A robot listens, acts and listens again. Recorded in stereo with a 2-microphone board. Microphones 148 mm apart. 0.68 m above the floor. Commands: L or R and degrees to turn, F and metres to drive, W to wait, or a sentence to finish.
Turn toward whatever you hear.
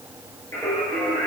L20
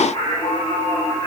L135
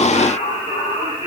L40
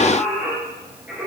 R10
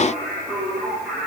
Found it: singing, straight ahead, over 4 m away.